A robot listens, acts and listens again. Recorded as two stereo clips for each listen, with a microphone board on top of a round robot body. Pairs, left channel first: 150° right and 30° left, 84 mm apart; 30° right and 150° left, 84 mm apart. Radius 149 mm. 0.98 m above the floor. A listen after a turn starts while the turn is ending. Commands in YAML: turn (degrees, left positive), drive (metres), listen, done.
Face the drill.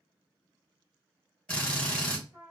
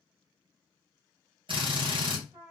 turn: 135
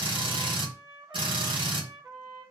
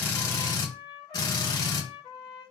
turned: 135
turn: 10
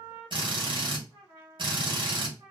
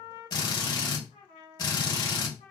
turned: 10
done: "Facing the drill, 2 to 4 m away."